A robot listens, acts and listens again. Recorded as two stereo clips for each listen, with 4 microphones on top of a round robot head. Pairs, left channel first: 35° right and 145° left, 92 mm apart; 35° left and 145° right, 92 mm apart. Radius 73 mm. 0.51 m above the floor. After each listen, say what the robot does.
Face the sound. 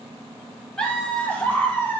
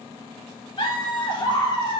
Turn 25° left.
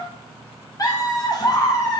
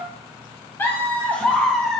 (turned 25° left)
Turn 50° right.
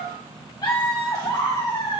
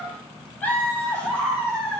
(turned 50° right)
Turn 45° right.
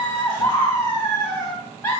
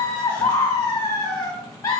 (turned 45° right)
Turn 15° left.
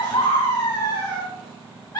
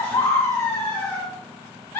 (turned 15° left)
Facing the laughter.